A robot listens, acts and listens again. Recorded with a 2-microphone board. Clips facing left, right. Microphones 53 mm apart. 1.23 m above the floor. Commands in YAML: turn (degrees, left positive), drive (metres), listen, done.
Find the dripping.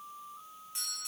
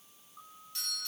listen: true
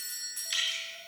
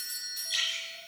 turn: 90
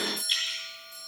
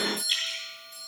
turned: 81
turn: 10
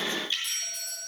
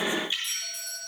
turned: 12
done: "Facing the dripping, over 4 m away."